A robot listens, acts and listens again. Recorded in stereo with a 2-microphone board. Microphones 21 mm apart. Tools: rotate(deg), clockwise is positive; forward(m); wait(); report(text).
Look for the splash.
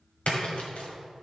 rotate(-90)
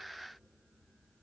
report("I heard a splash from this way, but can't make it out now.")